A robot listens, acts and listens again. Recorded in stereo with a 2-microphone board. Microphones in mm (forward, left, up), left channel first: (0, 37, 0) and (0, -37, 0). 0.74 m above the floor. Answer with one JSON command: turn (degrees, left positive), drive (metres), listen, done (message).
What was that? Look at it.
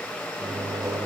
{"turn": -50}
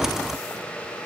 {"listen": true}
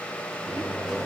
{"done": "Found it: a microwave, straight ahead."}